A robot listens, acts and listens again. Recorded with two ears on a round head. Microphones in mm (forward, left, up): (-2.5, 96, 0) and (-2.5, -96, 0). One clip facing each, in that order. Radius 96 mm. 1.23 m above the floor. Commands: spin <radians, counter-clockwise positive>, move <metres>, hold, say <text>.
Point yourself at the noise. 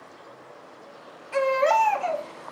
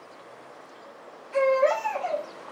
spin 1.22
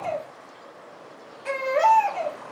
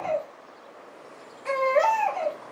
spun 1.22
spin 0.17
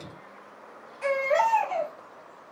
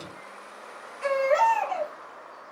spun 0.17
say Facing the baby crying, 1 to 2 m away.